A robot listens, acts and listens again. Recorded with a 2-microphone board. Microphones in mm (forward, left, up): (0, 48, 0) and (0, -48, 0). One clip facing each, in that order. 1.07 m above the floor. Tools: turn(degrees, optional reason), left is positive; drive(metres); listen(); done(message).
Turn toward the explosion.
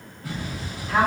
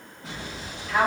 turn(degrees=-25, reason="The explosion: about 25° right or 155° right.")
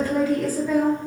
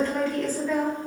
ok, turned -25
listen()
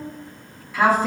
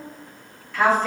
done("I heard an explosion, but can't make it out now. It was about straight ahead or 130° right.")